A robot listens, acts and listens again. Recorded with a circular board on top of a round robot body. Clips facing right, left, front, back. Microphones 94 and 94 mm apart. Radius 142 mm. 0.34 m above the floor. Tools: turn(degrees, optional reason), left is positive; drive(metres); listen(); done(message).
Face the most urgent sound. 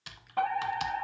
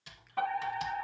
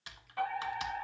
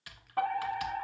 turn(degrees=-130, reason="The fire alarm: 130° right.")
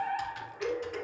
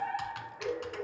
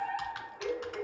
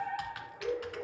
done("Facing the fire alarm, over 4 m away.")